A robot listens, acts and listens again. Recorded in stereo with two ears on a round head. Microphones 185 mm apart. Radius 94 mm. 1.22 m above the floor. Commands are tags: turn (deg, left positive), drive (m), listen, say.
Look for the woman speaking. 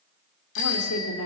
<turn deg="90"/>
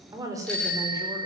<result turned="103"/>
<turn deg="-15"/>
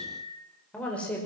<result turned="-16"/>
<say>Facing the woman speaking.</say>